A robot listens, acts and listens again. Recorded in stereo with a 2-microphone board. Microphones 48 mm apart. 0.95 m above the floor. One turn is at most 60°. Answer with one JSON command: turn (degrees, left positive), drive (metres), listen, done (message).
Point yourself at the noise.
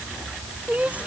{"turn": -25}
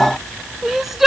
{"done": "Found it: crying, straight ahead."}